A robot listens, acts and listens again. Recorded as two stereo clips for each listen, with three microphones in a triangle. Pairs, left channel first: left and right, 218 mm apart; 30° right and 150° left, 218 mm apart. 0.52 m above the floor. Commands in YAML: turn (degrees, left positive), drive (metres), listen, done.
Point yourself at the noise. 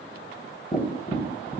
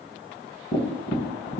turn: 20
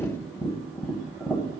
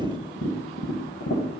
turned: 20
done: "Found it: tapping, straight ahead, 1 to 2 m away."